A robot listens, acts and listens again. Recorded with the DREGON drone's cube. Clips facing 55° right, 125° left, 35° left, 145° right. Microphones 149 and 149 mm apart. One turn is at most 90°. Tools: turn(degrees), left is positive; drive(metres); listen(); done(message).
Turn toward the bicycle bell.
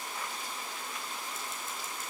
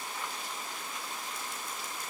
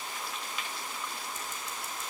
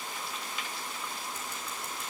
listen()
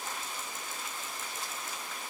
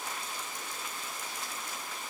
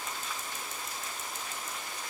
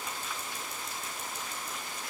listen()
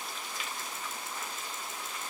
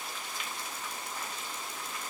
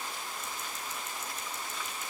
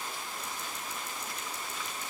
done("I can't make out a bicycle bell to turn to.")